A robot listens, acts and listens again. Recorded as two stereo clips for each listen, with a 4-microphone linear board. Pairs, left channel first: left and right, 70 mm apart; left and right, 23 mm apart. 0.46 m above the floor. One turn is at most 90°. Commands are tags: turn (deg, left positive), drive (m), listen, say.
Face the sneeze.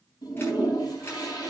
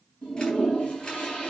<listen/>
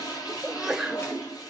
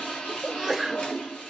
<turn deg="-30"/>
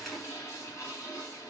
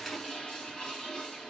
<listen/>
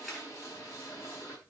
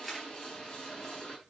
<say>I heard a sneeze, but can't make it out now. It was about 20° left or 140° right.</say>